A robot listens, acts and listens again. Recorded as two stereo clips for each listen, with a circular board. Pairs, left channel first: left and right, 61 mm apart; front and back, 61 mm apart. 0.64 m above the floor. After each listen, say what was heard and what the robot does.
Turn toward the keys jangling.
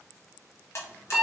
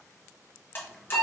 Keep listening.
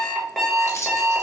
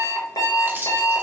The keys jangling: 125° left. Turn 125° left.
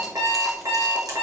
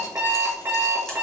Keep listening.
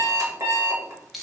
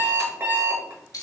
Found it: keys jangling, straight ahead.